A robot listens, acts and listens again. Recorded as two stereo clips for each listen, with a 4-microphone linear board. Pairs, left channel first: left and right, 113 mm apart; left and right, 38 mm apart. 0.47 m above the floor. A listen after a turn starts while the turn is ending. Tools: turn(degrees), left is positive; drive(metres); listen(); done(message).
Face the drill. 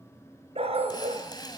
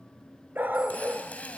turn(degrees=40)
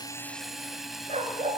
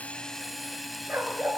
done("Found it: a drill, straight ahead.")